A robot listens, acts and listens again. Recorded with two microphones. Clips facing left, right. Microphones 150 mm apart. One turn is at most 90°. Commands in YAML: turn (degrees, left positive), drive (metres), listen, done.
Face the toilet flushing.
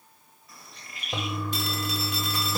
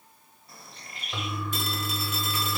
turn: 40
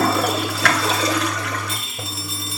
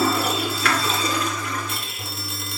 turn: 90
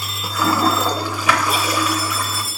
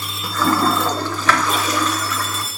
turn: 10
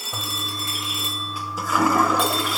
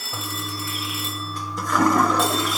done: "Found it: a toilet flushing, straight ahead."